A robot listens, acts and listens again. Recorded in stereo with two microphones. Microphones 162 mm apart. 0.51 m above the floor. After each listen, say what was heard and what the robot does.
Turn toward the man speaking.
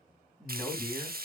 Turn 30° left.
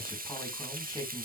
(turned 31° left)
So it is at 160° left. Turn 160° left.
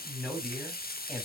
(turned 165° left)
Found it: a man speaking, straight ahead.